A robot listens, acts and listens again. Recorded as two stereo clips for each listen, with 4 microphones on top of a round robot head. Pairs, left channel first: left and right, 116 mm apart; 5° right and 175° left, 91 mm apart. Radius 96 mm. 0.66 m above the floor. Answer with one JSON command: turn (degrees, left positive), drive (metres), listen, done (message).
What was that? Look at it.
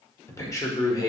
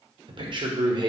{"turn": 145}
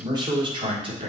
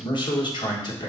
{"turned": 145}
{"turn": -50}
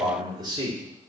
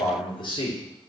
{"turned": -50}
{"turn": -35}
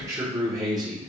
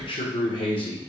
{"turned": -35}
{"turn": -30}
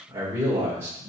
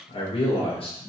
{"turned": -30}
{"turn": -15}
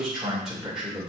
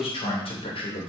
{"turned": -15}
{"done": "Facing the man speaking, 2 to 4 m away."}